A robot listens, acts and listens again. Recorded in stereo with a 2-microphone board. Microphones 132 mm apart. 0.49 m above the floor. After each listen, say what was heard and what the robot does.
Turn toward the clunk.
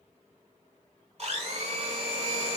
Keep listening.
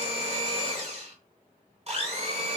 Keep listening.
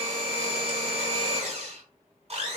I can't make out a clunk to turn to.